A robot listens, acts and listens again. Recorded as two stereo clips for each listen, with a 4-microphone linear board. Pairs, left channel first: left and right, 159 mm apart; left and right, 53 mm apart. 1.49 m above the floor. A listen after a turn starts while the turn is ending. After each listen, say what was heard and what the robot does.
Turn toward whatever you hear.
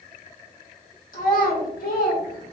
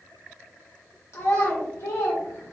The child speaking: about 70° left or 110° left. Turn 70° left.
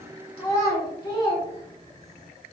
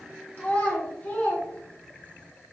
So it is at 30° left. Turn 30° left.
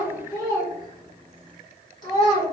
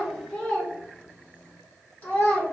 The child speaking is now 30° left. Turn 30° left.
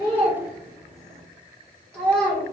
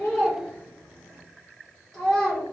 Found it: a child speaking, straight ahead.